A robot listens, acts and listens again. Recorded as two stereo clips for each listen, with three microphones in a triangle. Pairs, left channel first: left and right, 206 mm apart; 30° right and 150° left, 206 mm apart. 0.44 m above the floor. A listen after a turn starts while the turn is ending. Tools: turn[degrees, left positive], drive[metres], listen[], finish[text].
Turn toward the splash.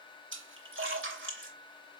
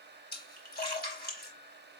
Thought: The splash: 75° right.
Action: turn[-75]
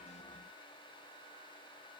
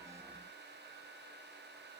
Action: finish[Facing where the splash came from. I can't hear it now.]